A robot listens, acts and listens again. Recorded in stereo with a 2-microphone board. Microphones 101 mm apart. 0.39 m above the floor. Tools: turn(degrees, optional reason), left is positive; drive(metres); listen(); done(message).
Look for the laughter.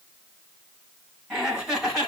turn(degrees=-30)
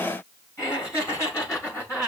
turn(degrees=30, reason="So it is at 30° left.")
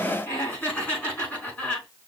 turn(degrees=15, reason="The laughter is now 15° left.")
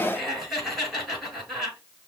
done("Found it: laughter, straight ahead.")